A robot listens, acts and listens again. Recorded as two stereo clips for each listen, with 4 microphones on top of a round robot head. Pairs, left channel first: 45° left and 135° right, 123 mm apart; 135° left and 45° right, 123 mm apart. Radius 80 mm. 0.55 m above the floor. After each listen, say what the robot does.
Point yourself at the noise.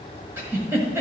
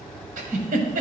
Turn 60° right.
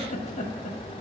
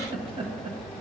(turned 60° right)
Found it: a giggle, straight ahead.